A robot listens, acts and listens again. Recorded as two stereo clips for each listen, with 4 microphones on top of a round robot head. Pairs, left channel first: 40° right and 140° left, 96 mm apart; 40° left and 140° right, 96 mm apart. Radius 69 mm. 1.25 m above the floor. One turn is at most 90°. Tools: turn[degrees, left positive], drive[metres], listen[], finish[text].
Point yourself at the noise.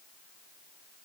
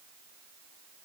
Action: listen[]
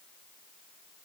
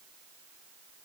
Action: listen[]
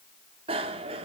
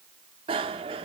Thought: The bicycle bell: straight behind.
Action: turn[90]
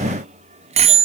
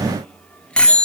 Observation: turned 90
Thought: The bicycle bell is now 120° left.
Action: turn[90]
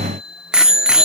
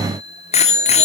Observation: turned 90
Thought: The bicycle bell is now 60° left.
Action: turn[60]
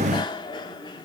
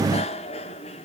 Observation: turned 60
Action: listen[]
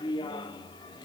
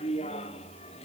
Thought: The bicycle bell is now 10° left.
Action: turn[10]
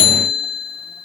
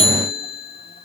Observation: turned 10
Action: finish[Facing the bicycle bell.]